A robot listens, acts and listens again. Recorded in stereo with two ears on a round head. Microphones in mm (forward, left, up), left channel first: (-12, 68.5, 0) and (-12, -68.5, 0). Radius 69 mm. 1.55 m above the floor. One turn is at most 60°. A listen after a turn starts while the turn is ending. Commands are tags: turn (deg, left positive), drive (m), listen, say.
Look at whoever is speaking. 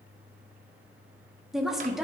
<turn deg="-30"/>
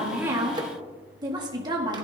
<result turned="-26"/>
<turn deg="-60"/>
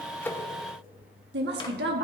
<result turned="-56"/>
<turn deg="-60"/>
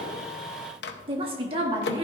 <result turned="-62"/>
<turn deg="-35"/>
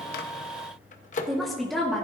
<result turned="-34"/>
<say>Facing the woman speaking.</say>